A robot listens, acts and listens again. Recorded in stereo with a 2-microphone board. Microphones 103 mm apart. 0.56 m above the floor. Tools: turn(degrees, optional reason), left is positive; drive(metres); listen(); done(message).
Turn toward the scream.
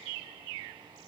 listen()
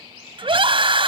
turn(degrees=-60, reason="The scream: about 60° right or 120° right.")
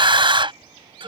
turn(degrees=-60, reason="So it is at 60° right.")
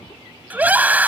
turn(degrees=-15, reason="The scream is now 15° right.")
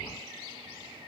listen()
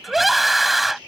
done("Found it: a scream, straight ahead.")